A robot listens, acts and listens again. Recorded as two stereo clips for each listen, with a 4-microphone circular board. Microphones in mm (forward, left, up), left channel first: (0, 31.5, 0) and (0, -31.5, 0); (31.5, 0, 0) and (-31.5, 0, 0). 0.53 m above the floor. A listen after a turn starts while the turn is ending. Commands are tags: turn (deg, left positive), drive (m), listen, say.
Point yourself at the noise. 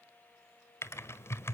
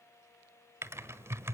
<turn deg="135"/>
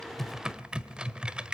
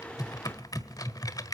<turn deg="-15"/>
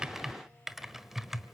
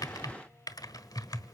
<say>Found it: typing on a keyboard, straight ahead, 1 to 2 m away.</say>